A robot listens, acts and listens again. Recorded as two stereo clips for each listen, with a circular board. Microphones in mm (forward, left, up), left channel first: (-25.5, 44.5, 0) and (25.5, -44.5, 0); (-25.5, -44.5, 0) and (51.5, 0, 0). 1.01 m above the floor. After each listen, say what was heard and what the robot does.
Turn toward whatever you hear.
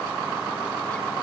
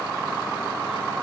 Keep listening.
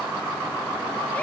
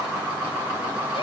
Keep listening.
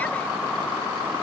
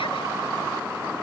I can't make out anything to turn to.